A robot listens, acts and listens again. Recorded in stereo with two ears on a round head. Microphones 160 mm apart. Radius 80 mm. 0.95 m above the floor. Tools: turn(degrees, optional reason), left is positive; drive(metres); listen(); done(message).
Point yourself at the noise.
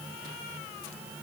listen()
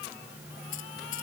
turn(degrees=90)
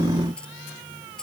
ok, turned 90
done("Found it: keys jangling, straight ahead.")